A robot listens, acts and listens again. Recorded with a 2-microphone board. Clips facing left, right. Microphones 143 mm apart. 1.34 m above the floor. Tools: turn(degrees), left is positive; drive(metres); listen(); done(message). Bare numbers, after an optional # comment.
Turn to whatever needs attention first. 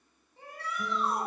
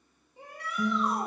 # The shout: about 15° right or 165° right.
turn(-15)
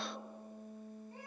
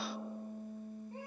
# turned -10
listen()
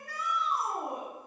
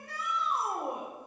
# So it is at 155° right.
turn(-155)
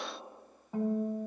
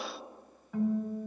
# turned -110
# Nothing new. It was at 45° right.
turn(-45)
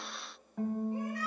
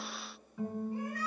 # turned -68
# Nothing new. It was at 25° left.
turn(25)
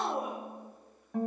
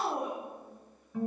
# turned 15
# The shout is now 10° left.
turn(10)
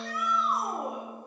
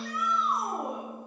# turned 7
done("Facing the shout.")